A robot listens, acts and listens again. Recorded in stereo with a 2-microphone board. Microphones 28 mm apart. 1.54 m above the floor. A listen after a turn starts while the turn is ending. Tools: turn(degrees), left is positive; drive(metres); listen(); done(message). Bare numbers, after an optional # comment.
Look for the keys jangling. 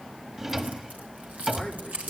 # The keys jangling: about 70° right or 110° right.
turn(-70)
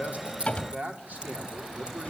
listen()
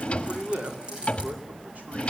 # So it is at 35° right.
turn(-35)
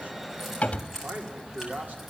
# The keys jangling is now 10° right.
turn(-10)
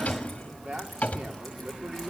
listen()
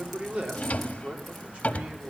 listen()
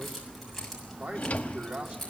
done("Facing the keys jangling, over 4 m away.")